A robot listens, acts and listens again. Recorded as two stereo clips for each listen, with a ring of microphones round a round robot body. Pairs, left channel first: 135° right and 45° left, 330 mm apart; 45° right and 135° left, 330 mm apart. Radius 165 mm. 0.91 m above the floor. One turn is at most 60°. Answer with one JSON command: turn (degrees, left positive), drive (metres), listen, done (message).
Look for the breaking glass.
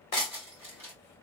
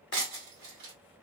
{"turn": 60}
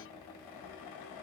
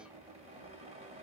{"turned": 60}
{"turn": 60}
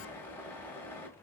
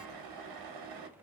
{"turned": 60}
{"turn": 10}
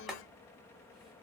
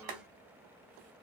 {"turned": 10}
{"done": "I heard breaking glass from this way, but can't make it out now."}